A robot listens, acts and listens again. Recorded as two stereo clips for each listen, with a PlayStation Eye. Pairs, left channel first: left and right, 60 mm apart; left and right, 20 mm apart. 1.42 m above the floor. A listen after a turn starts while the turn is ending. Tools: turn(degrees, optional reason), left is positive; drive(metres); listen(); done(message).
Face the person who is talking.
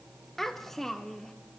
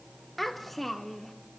turn(degrees=30)
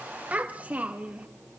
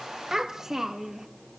turn(degrees=-25, reason="So it is at 25° right.")
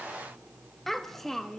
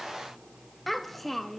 done("Found it: a child speaking, straight ahead, 1 to 2 m away.")